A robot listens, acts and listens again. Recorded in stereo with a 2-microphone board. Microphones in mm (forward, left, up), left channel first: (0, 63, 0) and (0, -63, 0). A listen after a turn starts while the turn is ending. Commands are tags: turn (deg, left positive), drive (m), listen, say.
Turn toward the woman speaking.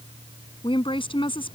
<turn deg="45"/>
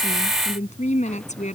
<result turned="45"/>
<turn deg="90"/>
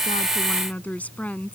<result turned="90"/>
<turn deg="10"/>
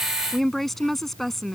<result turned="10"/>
<say>Found it: a woman speaking, straight ahead.</say>